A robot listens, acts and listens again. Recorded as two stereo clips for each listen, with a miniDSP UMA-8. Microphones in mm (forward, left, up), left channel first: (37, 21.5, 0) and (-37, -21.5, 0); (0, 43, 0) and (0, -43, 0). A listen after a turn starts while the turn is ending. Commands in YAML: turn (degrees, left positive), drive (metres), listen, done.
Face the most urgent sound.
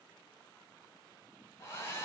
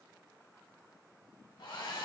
listen: true
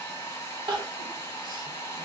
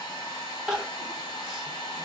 turn: -170
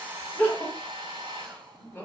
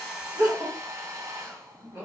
turn: -35
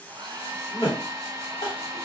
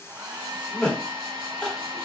turn: 10
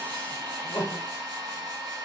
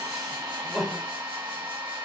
done: "Facing the crying."